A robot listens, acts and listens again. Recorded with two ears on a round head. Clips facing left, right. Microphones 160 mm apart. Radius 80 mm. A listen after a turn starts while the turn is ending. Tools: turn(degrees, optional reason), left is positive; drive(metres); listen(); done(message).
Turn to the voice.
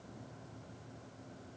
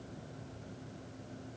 listen()
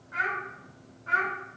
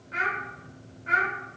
turn(degrees=-25, reason="The child speaking: about 25° right or 155° right.")
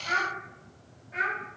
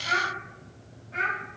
turn(degrees=10, reason="So it is at 10° left.")
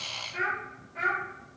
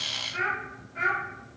turn(degrees=10, reason="The child speaking is now 10° left.")
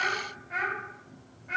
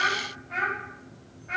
turn(degrees=10, reason="The child speaking is now 10° left.")
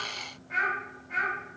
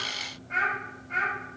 done("Facing the child speaking.")